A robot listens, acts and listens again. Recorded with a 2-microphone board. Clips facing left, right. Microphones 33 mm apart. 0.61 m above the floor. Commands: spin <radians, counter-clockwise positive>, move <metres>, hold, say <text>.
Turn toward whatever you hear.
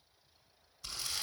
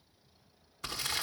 spin -1.31
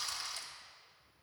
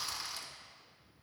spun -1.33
say Found it: crumpling, straight ahead.